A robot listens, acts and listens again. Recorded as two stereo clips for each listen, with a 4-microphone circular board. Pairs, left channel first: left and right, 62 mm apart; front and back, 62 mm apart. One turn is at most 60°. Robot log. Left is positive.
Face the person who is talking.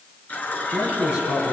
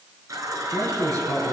note: The man speaking: 160° right.
cmd yaw -60
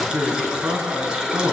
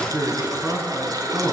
note: The man speaking is now 130° right.
cmd yaw -60
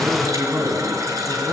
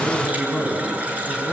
note: The man speaking is now 80° right.
cmd yaw -60
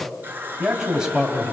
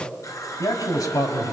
note: The man speaking is now 10° right.
cmd yaw -10
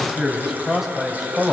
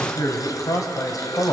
end: Found it: a man speaking, straight ahead, 2 to 4 m away.